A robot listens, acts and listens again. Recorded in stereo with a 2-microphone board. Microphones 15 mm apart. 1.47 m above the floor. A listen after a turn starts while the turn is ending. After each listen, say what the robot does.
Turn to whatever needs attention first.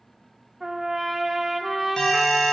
Turn 60° left.
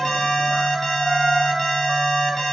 Turn 55° left.
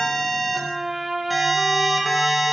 Found it: an alarm, straight ahead, 2 to 4 m away.